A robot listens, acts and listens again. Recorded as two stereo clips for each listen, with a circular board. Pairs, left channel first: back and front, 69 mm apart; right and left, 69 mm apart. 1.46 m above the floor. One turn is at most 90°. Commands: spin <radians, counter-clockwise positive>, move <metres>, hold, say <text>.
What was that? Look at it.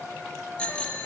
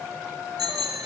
spin 1.57
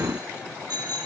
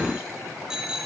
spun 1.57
spin 0.17
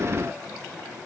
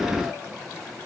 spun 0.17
hold
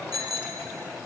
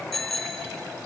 say Facing the bicycle bell, 2 to 4 m away.